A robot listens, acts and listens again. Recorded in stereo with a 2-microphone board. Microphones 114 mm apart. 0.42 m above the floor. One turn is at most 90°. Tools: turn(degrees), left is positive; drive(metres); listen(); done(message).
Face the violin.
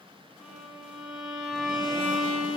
turn(degrees=30)
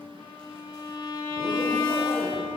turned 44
turn(degrees=90)
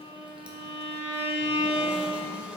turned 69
turn(degrees=70)
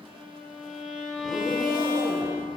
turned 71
done("Facing the violin, 2 to 4 m away.")